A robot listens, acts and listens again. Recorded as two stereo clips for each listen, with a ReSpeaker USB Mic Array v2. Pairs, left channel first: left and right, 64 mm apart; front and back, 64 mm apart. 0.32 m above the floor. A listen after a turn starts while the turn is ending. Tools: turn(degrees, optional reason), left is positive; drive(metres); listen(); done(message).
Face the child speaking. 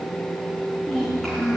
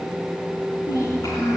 turn(degrees=15, reason="The child speaking: 15° left.")
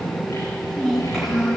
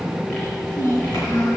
done("Found it: a child speaking, straight ahead, over 4 m away.")